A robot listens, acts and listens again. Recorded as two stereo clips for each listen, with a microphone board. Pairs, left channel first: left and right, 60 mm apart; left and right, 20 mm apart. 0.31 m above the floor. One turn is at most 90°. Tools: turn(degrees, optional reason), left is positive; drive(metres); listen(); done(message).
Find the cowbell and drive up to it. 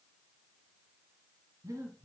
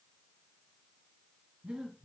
listen()
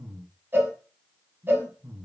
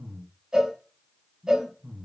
turn(degrees=-35, reason="The cowbell: about 35° right or 145° right.")
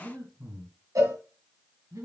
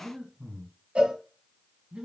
turn(degrees=-90, reason="So it is at 105° right.")
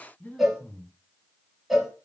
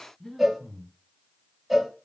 drive(metres=1.0)
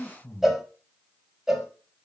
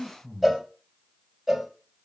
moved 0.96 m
turn(degrees=-10, reason="The cowbell is now 10° right.")
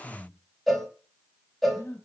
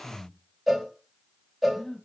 drive(metres=1.0)
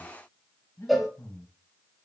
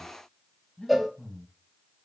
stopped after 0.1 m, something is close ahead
done("Arrived at the cowbell, straight ahead.")